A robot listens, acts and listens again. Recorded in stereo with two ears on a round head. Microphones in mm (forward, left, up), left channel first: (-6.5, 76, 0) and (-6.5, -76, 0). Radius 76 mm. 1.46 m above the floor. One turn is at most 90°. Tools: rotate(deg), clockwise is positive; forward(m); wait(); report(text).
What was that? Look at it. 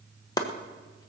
rotate(-25)
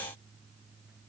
wait()
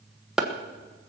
report("Found it: chopping, straight ahead.")